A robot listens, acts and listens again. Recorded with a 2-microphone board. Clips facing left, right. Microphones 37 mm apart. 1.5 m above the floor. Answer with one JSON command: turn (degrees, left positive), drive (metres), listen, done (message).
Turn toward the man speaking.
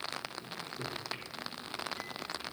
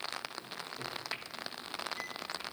{"listen": true}
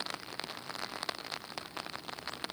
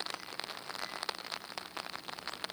{"listen": true}
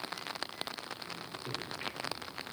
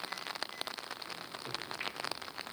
{"done": "I can't make out a man speaking to turn to."}